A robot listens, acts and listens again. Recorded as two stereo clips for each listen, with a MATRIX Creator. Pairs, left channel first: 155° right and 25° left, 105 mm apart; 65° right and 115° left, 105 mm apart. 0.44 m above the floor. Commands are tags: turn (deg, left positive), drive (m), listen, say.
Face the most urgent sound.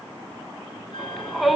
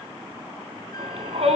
<turn deg="115"/>
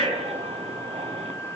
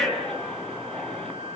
<turn deg="15"/>
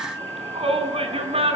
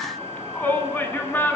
<say>Facing the shout, over 4 m away.</say>